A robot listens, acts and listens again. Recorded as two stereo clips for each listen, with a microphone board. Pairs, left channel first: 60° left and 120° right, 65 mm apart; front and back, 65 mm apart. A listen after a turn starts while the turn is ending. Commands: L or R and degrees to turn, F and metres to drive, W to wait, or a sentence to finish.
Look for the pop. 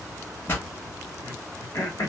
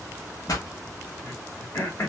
Facing the pop, 1 to 2 m away.